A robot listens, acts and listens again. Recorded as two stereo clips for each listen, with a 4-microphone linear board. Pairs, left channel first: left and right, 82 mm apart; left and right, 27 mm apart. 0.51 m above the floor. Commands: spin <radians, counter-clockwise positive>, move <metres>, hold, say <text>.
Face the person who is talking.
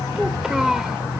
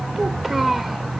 spin -0.52
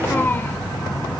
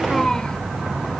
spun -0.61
spin 0.52
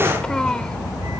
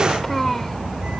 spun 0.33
spin 0.17
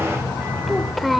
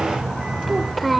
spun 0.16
say Facing the child speaking.